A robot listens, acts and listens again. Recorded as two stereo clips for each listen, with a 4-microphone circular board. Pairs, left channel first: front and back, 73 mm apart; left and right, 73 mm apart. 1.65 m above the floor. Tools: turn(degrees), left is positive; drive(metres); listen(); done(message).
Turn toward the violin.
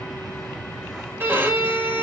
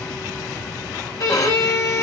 turn(degrees=125)
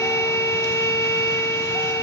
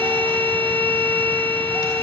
turn(degrees=30)
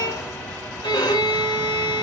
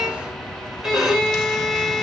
done("Facing the violin.")